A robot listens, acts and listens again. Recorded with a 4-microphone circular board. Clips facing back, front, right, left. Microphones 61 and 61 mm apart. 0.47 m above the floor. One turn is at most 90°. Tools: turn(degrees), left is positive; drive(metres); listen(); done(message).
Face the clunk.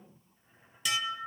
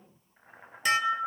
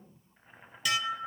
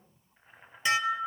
listen()
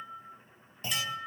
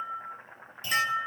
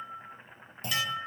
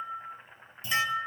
turn(degrees=-90)
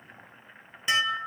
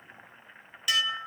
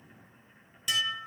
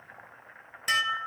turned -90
turn(degrees=-30)
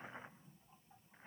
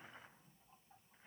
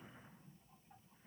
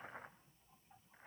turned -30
done("I heard a clunk from this way, but can't make it out now.")